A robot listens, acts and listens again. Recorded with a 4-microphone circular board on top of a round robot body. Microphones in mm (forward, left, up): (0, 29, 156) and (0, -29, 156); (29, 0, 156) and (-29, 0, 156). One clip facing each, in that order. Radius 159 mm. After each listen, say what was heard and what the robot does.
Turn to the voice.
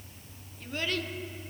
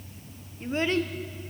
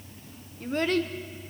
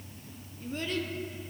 The child speaking: 30° right. Turn 30° right.
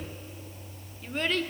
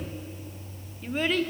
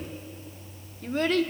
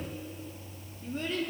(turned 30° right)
Facing the child speaking, 1 to 2 m away.